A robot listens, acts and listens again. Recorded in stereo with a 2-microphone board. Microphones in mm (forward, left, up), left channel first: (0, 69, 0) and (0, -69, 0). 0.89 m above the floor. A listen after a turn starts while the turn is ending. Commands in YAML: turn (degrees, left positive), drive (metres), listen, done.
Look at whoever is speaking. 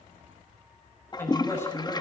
turn: 15
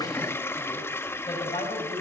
turn: 150
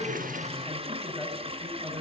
done: "Found it: a woman speaking, straight ahead, over 4 m away."